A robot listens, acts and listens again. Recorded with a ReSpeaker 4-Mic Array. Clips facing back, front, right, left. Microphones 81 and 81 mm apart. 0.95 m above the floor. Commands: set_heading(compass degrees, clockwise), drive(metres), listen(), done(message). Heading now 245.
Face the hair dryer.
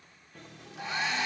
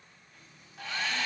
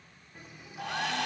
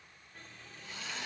set_heading(350)
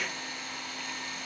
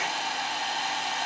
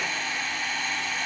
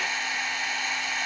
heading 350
set_heading(340)
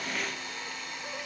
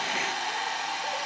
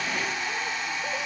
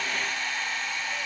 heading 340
done("Facing the hair dryer, over 4 m away.")